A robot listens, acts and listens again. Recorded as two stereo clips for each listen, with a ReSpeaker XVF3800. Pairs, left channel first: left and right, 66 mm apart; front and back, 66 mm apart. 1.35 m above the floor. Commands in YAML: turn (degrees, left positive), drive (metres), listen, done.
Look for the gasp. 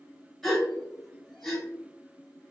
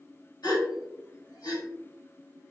done: "Found it: a gasp, straight ahead, 1 to 2 m away."